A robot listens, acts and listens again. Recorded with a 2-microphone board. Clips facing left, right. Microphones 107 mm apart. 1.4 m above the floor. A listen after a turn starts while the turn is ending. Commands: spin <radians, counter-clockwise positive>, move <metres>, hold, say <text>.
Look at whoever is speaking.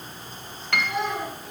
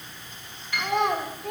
spin -1.13
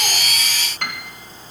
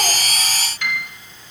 hold
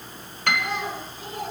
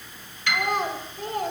spin -0.87
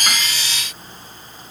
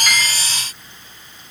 hold
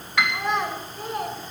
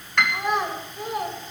say Found it: a child speaking, straight ahead.